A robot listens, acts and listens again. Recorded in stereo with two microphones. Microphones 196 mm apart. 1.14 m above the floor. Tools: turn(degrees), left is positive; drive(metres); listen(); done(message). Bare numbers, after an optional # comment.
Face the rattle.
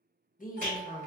# The rattle: about 45° right or 135° right.
turn(-45)
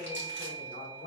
listen()
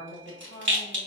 # So it is at 85° right.
turn(-85)
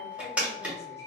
done("Facing the rattle, 1 to 2 m away.")